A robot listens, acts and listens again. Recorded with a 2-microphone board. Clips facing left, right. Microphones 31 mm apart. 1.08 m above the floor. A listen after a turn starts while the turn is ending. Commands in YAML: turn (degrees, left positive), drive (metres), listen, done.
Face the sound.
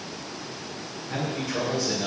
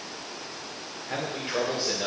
turn: -35
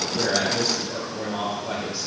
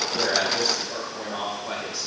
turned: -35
turn: 10
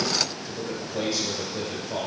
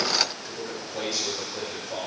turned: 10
turn: 10
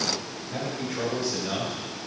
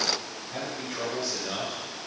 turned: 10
done: "Found it: a man speaking, straight ahead."